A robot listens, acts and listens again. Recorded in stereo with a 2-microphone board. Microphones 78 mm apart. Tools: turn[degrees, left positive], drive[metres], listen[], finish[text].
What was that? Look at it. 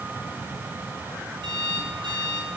Action: turn[-90]
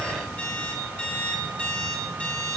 Thought: So it is at 20° left.
Action: turn[20]
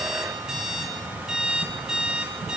Action: finish[Facing the alarm clock.]